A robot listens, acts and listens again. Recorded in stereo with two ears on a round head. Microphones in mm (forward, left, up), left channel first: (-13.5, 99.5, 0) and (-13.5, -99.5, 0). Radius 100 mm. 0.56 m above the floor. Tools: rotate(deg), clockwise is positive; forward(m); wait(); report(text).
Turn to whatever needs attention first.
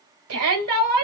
rotate(70)
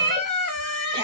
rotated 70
rotate(20)
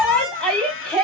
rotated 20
report("Facing the shout, 2 to 4 m away.")